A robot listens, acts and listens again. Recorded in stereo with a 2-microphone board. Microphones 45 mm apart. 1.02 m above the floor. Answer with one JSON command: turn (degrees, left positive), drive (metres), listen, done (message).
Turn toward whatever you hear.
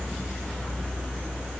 {"listen": true}
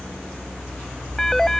{"turn": 30}
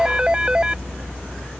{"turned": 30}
{"turn": -20}
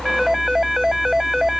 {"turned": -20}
{"done": "Facing the phone ringing."}